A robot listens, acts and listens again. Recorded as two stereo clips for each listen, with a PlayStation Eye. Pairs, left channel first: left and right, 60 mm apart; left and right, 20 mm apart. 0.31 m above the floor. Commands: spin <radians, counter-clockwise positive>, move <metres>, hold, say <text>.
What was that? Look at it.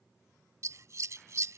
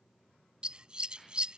spin -0.96
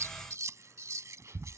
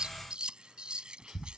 spin -1.05
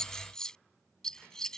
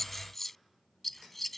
spin 0.17
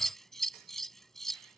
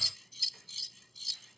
say Facing the scissors.